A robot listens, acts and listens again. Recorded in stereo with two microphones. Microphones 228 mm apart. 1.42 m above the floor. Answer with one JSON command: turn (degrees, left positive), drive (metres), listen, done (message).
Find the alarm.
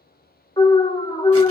{"turn": 20}
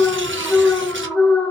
{"done": "Found it: an alarm, straight ahead, 1 to 2 m away."}